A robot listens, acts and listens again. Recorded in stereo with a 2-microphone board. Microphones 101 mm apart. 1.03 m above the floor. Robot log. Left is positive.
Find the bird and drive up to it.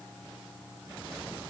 cmd idle
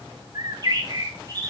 note: The bird: about 40° right or 140° right.
cmd yaw -40
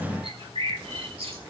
note: So it is at 95° right.
cmd yaw -95
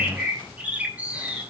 note: The bird is now 15° right.
cmd yaw -15
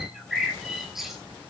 cmd fwd 1.0
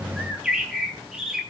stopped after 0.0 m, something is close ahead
end: Blocked. The bird is further on, straight ahead.